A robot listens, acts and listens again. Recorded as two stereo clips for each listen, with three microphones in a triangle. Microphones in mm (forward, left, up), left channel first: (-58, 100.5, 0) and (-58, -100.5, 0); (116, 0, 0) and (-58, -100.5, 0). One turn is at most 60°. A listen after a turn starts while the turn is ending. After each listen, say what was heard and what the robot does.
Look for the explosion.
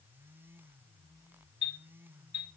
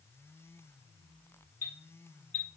Keep listening.
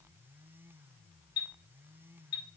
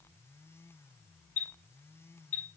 Keep listening.
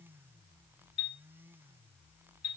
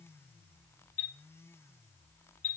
I can't make out an explosion to turn to.